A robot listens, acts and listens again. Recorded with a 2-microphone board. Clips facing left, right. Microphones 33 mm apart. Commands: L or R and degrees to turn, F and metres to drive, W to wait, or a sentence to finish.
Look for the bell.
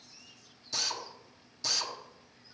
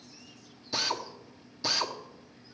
W
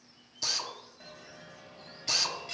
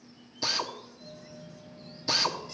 L90
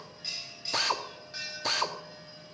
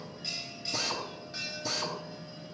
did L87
Facing the bell.